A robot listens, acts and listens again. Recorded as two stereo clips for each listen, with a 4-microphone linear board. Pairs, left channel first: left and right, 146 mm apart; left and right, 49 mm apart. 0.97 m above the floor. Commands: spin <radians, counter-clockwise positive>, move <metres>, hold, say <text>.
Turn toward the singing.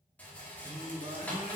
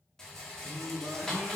spin -0.52
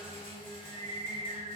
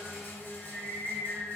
spin 0.52
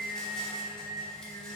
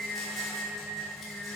spin 0.17
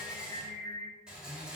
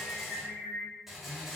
say Facing the singing, 2 to 4 m away.